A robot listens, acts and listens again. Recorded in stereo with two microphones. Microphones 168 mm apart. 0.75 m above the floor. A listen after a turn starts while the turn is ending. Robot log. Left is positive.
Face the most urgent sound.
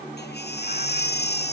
cmd yaw +90
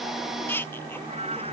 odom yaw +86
note: So it is at 10° left.
cmd yaw +10
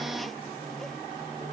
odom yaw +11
cmd idle
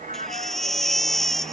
end: Found it: a baby crying, straight ahead.